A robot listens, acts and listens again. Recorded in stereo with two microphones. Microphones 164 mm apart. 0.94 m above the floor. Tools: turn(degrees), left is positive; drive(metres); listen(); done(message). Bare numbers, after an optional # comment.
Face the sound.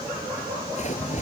# The splash: about 45° left or 135° left.
turn(45)
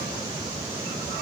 listen()
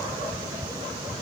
done("I heard a splash, but can't make it out now. It was about straight ahead or 90° left.")